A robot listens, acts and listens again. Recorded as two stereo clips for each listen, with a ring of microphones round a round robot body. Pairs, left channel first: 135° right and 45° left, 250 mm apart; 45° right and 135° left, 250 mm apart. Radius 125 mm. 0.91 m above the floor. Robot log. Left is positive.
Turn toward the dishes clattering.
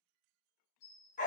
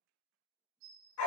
note: The dishes clattering: straight behind.
cmd yaw +180
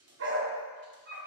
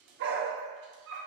cmd idle
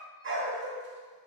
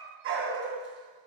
cmd idle
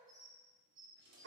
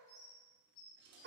note: The dishes clattering is now 15° right.
cmd yaw -15
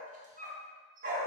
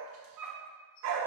cmd idle
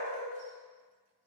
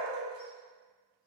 cmd idle
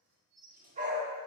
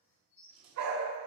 end: Found it: dishes clattering, straight ahead.